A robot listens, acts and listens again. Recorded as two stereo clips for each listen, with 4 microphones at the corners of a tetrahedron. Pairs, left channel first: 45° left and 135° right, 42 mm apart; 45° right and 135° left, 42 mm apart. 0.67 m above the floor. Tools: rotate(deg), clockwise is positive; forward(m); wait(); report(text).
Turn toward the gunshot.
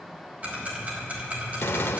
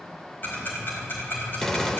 rotate(-35)
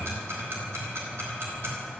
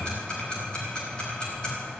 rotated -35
report("I heard a gunshot from this way, but can't make it out now.")